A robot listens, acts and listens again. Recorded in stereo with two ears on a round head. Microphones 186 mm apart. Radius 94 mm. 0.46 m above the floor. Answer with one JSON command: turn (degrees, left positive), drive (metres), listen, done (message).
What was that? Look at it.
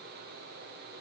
{"listen": true}
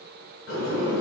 {"turn": 60}
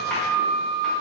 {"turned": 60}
{"done": "Found it: a sliding door, straight ahead, 1 to 2 m away."}